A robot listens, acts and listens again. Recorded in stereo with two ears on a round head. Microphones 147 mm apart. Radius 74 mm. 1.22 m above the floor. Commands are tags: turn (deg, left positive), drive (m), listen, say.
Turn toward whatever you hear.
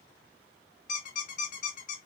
<turn deg="50"/>
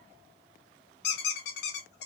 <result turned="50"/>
<turn deg="75"/>
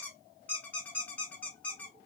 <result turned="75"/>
<turn deg="10"/>
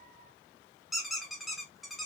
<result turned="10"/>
<say>Found it: a squeak, straight ahead, under 1 m away.</say>